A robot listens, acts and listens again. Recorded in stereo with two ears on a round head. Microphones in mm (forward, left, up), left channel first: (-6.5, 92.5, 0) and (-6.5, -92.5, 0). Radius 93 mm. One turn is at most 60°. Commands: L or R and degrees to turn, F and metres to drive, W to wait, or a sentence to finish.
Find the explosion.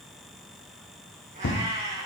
L55
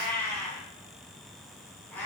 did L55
W
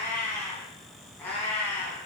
I heard an explosion, but can't make it out now. It was about straight ahead or 70° left.